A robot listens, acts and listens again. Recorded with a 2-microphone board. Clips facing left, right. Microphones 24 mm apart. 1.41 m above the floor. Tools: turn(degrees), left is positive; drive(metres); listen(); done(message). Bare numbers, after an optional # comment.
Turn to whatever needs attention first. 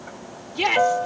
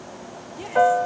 # The shout: about 70° left or 110° left.
turn(70)
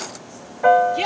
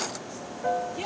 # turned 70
# So it is at 45° left.
turn(45)
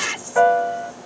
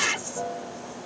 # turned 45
done("Facing the shout.")